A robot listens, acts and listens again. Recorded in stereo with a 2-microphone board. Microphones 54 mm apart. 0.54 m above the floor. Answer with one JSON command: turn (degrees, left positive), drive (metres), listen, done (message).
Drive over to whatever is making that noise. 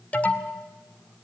{"turn": 30}
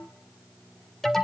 {"drive": 1.0}
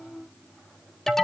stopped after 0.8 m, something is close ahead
{"turn": 10}
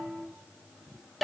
{"done": "Arrived at the alarm, straight ahead."}